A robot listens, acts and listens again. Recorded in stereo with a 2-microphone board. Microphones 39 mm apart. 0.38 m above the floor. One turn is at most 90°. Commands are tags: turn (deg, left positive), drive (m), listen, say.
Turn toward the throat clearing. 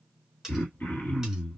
<turn deg="70"/>
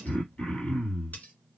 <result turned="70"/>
<turn deg="40"/>
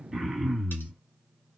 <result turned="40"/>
<say>Found it: throat clearing, straight ahead, 1 to 2 m away.</say>